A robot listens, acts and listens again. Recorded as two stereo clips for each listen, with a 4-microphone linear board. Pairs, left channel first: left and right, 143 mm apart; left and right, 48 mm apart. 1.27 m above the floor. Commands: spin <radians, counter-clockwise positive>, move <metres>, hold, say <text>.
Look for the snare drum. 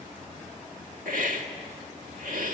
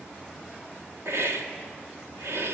hold
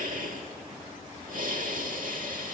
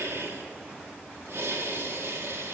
hold
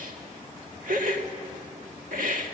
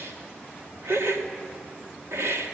say I can't make out a snare drum, only a hiss.